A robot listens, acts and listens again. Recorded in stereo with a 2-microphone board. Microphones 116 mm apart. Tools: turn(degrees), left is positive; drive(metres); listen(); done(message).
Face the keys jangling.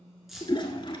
turn(degrees=30)
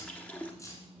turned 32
turn(degrees=155)
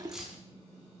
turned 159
done("Found it: keys jangling, straight ahead, 1 to 2 m away.")